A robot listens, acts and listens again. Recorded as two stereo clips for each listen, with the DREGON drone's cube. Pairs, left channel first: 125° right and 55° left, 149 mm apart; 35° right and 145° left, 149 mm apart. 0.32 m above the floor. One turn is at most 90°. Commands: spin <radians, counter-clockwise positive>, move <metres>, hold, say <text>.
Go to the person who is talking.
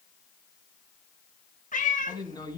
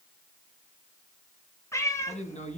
spin -1.13
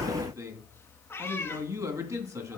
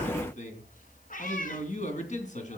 spin -0.17
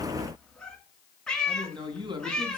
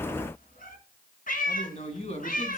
move 1.0
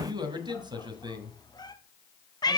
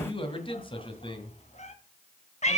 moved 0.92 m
move 1.0
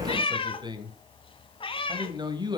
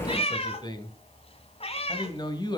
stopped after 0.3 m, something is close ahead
spin 0.17
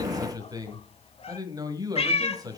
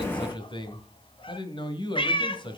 say Arrived at the man speaking, straight ahead.